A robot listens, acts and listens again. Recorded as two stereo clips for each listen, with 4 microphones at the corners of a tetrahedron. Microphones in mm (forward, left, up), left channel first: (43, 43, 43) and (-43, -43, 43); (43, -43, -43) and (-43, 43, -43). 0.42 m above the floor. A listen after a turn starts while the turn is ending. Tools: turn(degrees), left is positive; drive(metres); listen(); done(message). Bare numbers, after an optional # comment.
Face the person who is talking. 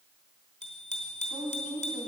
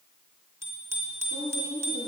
# The woman speaking: 35° right.
turn(-35)
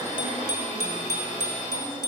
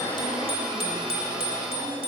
listen()
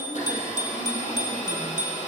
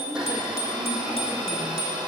listen()
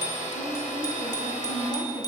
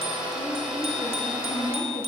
done("Facing the woman speaking.")